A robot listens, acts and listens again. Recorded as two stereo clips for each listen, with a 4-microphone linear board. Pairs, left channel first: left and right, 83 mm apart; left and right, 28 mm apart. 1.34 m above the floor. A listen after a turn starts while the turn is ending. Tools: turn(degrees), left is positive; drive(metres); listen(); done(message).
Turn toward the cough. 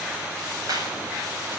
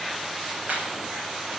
listen()
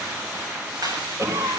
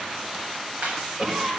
turn(degrees=-45)
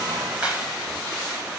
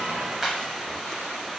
listen()
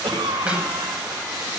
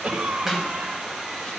turn(degrees=-95)
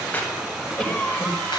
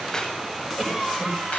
turn(degrees=10)
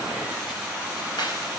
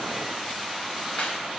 listen()
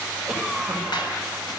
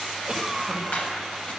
done("Facing the cough, over 4 m away.")